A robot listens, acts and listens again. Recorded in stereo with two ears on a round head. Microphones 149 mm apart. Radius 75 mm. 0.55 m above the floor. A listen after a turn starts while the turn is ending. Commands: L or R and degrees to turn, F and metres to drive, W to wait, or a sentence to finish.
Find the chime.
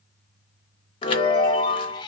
L30
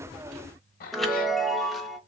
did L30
Facing the chime.